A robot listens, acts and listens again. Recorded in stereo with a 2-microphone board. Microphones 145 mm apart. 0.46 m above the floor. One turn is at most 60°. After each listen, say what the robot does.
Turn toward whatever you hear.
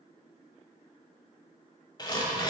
Turn 30° left.
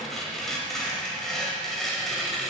Found it: tearing paper, straight ahead, 1 to 2 m away.